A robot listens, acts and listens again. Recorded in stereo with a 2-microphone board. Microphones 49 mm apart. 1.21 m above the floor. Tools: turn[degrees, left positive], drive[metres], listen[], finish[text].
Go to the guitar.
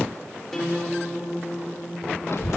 Action: turn[30]
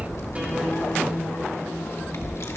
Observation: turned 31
Action: listen[]
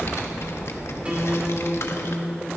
Thought: So it is at 25° right.
Action: turn[-25]
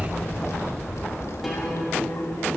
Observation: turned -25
Action: listen[]
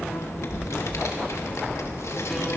Action: listen[]
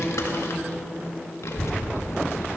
Action: finish[I heard a guitar from this way, but can't make it out now. I did not reach it.]